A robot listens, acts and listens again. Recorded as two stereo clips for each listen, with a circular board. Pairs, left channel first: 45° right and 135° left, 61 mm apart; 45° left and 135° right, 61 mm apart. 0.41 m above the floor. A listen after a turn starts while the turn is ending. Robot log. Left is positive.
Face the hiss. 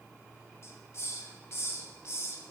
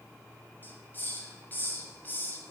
note: The hiss: 10° right.
cmd yaw -10
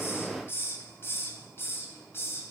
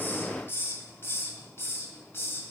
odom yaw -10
end: Found it: a hiss, straight ahead, 1 to 2 m away.